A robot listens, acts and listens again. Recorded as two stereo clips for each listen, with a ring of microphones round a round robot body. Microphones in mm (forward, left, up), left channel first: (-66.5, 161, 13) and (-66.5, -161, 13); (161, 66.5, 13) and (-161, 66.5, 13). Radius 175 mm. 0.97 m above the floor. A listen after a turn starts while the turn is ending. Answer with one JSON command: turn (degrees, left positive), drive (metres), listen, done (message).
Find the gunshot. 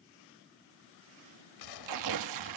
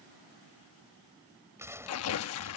{"turn": 100}
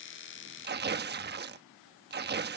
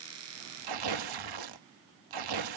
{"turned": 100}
{"done": "Facing where the gunshot came from. I can't hear it now."}